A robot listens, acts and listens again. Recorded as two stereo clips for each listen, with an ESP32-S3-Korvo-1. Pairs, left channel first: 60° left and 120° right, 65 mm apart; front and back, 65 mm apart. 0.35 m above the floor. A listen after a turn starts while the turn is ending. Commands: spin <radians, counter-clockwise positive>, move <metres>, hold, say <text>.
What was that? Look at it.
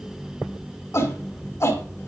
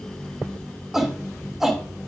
spin 1.66
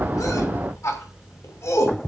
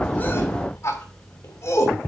spin 0.52
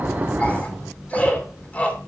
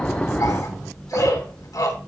say Facing the shout, 2 to 4 m away.